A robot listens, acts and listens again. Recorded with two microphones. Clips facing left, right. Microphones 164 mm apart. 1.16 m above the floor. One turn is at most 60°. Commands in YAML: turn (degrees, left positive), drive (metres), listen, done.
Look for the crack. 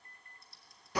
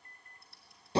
listen: true
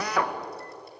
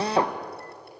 listen: true
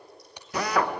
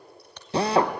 turn: 30
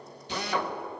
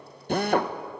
listen: true
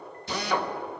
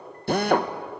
done: "I heard a crack, but can't make it out now. It was about 20° right or 140° left."